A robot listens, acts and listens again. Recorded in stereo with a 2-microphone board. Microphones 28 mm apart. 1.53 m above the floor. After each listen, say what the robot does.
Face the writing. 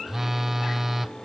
Keep listening.
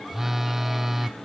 Keep listening.
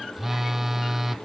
I can't make out writing, only a phone buzzing.